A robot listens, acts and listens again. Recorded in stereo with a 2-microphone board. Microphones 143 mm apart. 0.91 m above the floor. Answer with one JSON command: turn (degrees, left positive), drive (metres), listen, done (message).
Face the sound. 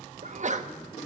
{"turn": -55}
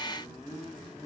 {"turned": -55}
{"listen": true}
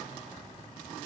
{"done": "I heard a sneeze, but can't make it out now. It was about straight ahead or 70° right."}